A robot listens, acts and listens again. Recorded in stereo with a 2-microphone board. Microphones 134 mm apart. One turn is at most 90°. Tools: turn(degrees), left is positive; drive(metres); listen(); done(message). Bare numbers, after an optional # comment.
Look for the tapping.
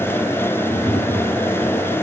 # The tapping: about 30° left or 150° left.
turn(30)
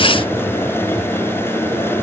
done("Facing the tapping.")